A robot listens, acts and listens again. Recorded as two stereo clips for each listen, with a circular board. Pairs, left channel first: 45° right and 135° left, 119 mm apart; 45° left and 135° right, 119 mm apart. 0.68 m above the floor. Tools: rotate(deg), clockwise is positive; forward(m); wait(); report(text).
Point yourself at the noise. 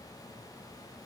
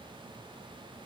wait()
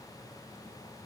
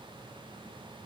wait()
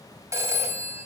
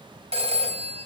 rotate(160)
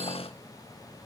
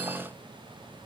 wait()
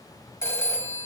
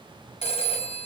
rotate(-20)
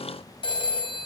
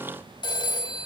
report("Facing the phone ringing.")